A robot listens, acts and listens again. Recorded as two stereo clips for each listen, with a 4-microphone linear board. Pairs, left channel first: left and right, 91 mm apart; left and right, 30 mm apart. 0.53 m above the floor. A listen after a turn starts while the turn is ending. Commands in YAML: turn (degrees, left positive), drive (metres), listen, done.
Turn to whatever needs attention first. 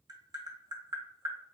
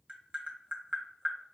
listen: true
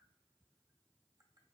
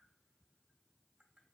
listen: true
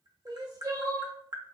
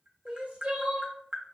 turn: -45
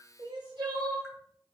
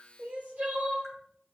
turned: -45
turn: -85
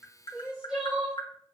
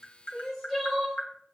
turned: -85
turn: -10
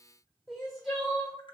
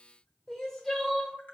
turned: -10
done: "Facing the crying, 1 to 2 m away."